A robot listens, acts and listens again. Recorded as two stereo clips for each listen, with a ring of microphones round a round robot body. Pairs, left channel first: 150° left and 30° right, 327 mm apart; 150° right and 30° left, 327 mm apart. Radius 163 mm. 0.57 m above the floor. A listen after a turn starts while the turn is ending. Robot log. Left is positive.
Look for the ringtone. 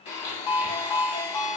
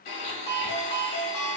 note: The ringtone: 140° left.
cmd yaw +140
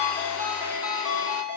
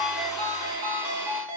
note: The ringtone is now 25° left.
cmd yaw +25
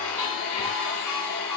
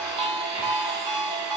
end: Facing the ringtone.